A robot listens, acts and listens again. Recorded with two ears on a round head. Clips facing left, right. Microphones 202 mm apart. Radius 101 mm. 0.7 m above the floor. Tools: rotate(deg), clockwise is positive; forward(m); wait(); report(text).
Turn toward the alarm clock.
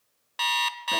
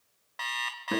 rotate(-50)
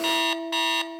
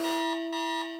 rotate(-80)
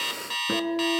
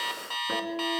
rotate(-25)
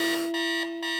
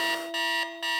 report("Found it: an alarm clock, straight ahead, 1 to 2 m away.")